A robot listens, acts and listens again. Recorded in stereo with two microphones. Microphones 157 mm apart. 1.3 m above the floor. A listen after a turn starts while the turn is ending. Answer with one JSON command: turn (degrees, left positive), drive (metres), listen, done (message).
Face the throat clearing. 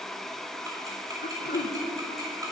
{"turn": 90}
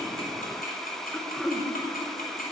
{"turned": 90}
{"done": "Facing the throat clearing, 1 to 2 m away."}